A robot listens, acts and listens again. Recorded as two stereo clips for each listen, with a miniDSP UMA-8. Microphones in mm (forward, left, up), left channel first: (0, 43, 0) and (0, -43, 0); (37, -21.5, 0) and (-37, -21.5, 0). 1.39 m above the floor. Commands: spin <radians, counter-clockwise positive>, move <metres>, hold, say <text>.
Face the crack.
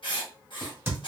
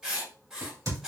spin -2.62
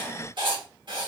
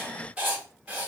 say I heard a crack from this way, but can't make it out now.